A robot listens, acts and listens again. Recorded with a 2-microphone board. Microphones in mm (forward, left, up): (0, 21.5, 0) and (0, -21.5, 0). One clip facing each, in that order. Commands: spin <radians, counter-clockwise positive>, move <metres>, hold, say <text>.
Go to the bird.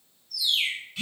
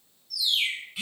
spin 0.61
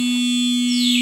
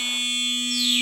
hold
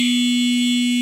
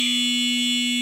hold
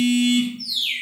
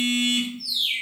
spin 1.83
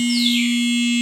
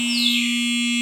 hold
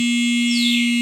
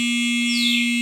hold
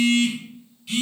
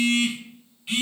say Facing where the bird came from. I can't hear it now. I did not reach it.